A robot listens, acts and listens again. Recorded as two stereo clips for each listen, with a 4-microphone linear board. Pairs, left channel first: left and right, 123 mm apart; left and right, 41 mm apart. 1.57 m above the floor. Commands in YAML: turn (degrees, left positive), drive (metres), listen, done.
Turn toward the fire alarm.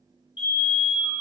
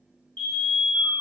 turn: 40
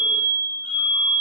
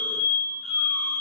done: "Facing the fire alarm."